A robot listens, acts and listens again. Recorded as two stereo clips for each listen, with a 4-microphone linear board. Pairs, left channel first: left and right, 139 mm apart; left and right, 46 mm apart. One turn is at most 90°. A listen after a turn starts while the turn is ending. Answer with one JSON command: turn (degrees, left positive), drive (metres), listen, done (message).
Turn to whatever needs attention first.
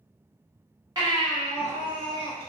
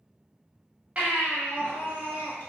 {"turn": -30}
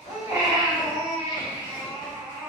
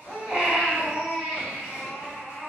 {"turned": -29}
{"done": "Found it: a baby crying, straight ahead, 1 to 2 m away."}